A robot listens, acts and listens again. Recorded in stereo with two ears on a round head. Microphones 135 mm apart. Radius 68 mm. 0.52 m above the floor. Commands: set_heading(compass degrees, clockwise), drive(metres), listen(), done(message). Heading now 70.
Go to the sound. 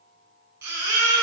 set_heading(85)
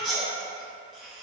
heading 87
drive(1.0)
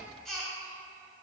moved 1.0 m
drive(1.0)
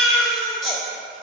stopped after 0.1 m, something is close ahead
done("I am next to the baby crying.")